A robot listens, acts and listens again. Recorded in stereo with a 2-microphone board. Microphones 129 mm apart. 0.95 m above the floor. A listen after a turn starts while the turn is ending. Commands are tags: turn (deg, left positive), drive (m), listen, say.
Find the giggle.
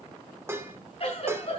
<turn deg="50"/>
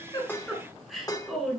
<say>Facing the giggle.</say>